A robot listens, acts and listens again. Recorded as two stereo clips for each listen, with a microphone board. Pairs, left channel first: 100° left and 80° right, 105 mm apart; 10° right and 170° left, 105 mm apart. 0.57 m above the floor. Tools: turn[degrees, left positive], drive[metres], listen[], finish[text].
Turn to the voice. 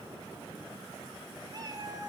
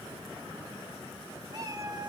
Action: listen[]
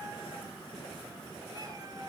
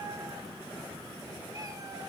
Action: listen[]
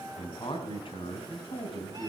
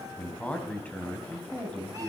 Thought: The man speaking: 65° left.
Action: turn[65]
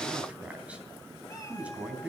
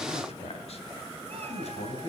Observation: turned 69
Action: finish[Found it: a man speaking, straight ahead, 2 to 4 m away.]